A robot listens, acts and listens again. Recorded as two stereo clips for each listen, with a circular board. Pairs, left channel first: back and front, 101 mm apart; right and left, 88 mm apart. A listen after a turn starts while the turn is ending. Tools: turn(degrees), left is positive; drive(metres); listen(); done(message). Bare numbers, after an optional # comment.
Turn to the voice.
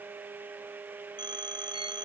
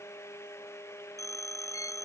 listen()
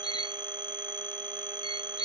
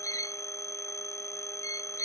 listen()
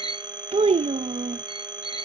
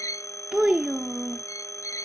# The child speaking: 10° left.
turn(10)
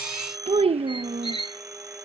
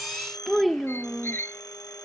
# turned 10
done("Facing the child speaking.")